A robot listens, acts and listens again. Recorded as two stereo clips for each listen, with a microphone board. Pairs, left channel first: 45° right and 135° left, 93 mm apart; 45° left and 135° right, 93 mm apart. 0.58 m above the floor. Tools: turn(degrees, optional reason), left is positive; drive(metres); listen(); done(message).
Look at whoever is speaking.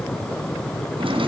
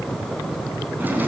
listen()
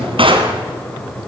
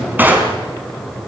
listen()
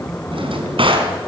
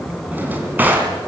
done("I can't make out anyone speaking, only a drawer.")